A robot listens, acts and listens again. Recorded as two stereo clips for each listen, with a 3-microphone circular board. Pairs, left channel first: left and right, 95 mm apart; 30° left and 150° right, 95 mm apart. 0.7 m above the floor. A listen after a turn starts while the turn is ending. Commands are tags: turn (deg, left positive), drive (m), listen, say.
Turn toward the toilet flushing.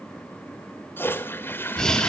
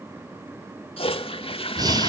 <turn deg="25"/>
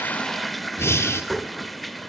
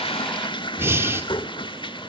<say>Facing the toilet flushing.</say>